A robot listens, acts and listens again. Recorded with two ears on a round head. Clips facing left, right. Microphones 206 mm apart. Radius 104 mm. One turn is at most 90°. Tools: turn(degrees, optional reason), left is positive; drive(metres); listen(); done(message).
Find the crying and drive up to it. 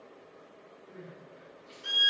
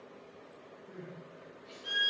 turn(degrees=-60, reason="The crying: about 60° right or 120° right.")
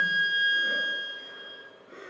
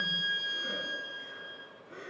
drive(metres=1.0)
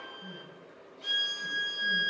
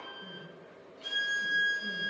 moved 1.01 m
listen()
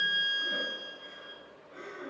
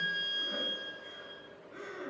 turn(degrees=-15, reason="The crying is now 15° right.")
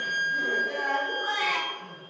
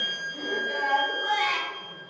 drive(metres=1.0)
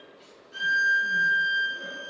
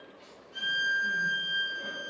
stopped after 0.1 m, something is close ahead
listen()
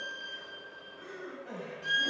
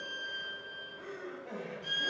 done("Arrived at the crying, straight ahead.")